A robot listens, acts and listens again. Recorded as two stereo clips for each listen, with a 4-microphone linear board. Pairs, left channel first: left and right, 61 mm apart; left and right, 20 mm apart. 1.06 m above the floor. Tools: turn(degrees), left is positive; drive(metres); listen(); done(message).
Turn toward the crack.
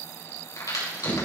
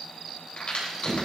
turn(degrees=65)
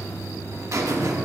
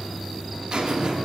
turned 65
listen()
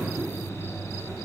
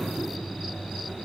done("I heard a crack, but can't make it out now. It was about straight ahead or 50° left.")